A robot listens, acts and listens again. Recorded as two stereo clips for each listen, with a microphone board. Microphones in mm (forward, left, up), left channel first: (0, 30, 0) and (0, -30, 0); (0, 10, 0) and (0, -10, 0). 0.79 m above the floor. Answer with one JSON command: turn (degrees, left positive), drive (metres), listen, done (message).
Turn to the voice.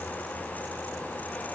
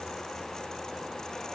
{"listen": true}
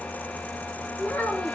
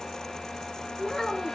{"turn": 30}
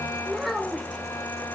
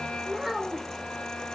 {"done": "Facing the child speaking, 2 to 4 m away."}